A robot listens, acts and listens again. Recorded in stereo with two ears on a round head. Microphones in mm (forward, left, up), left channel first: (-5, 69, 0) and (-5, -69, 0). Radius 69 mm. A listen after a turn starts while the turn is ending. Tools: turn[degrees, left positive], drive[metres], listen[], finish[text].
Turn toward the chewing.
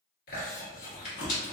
Thought: The chewing: about 65° left or 115° left.
Action: turn[65]
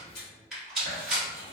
Thought: So it is at 35° left.
Action: turn[35]
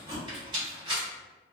Action: listen[]
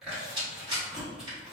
Action: finish[Found it: chewing, straight ahead.]